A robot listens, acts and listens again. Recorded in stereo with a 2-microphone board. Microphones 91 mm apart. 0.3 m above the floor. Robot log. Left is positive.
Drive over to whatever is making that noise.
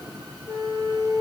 note: The flute: about 35° left or 145° left.
cmd yaw +35
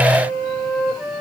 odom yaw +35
cmd fwd 1.0
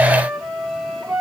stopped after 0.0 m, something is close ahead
end: Blocked. The flute is further on, straight ahead.